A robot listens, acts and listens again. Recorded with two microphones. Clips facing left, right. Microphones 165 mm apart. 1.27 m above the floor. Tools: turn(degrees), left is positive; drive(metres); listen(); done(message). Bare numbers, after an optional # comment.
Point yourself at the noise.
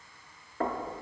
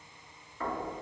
# The knocking: about 60° left or 120° left.
turn(60)
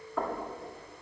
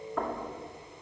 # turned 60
done("Found it: knocking, straight ahead.")